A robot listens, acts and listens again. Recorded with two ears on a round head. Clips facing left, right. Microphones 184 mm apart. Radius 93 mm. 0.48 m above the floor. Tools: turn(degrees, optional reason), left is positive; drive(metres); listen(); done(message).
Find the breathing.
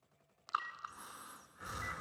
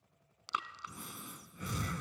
turn(degrees=-40, reason="The breathing: about 40° right or 140° right.")
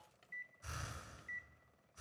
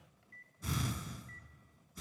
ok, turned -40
turn(degrees=-100, reason="So it is at 100° right.")
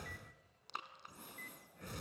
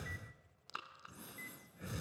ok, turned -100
done("Facing the breathing, under 1 m away.")